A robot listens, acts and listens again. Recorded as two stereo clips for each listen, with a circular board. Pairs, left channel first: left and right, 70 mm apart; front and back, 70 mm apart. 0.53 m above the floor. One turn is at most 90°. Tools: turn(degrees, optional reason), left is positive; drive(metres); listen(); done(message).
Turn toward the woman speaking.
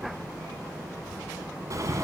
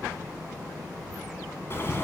listen()
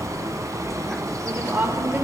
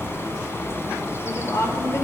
turn(degrees=-30, reason="The woman speaking: 30° right.")
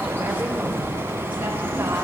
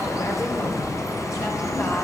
listen()
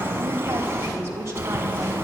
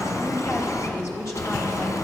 turn(degrees=-40, reason="The woman speaking is now 40° right.")
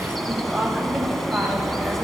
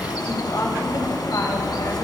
done("Found it: a woman speaking, straight ahead.")